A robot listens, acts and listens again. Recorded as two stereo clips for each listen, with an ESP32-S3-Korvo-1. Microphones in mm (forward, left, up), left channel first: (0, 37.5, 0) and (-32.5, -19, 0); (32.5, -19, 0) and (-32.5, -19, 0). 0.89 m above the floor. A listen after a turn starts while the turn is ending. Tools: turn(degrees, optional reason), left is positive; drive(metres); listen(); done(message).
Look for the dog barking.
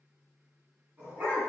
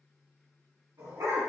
turn(degrees=175, reason="The dog barking: 175° left.")
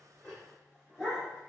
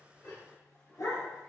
turn(degrees=-30, reason="The dog barking is now 30° right.")
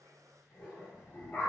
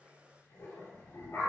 done("Found it: a dog barking, straight ahead, 2 to 4 m away.")